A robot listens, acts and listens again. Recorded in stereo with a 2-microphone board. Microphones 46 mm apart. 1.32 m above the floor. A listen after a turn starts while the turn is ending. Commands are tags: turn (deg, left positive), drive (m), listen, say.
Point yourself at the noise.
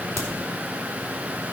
<turn deg="75"/>
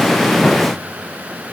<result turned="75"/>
<listen/>
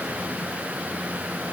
<say>I heard a crack, but can't make it out now. It was about straight ahead or 30° left.</say>